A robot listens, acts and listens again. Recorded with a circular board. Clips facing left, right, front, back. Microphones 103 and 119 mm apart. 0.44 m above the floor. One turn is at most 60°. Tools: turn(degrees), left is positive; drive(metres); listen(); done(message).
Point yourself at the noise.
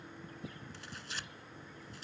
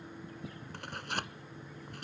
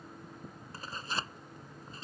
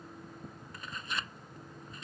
turn(degrees=-60)
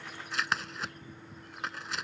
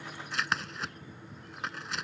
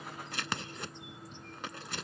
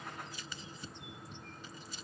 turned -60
done("Facing the tearing paper.")